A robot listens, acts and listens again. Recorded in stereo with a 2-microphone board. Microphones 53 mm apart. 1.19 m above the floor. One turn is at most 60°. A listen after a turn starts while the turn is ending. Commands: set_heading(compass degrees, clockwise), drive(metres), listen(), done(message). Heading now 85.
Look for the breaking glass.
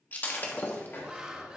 set_heading(45)
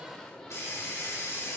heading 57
listen()
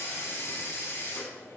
done("I heard breaking glass, but can't make it out now. It was about 10° left or 115° left.")